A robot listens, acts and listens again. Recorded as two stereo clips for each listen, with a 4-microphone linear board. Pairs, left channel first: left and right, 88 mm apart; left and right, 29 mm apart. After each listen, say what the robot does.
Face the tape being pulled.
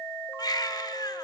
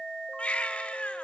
Keep listening.
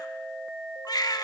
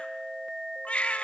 Keep listening.
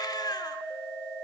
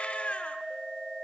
I can't make out tape being pulled to turn to.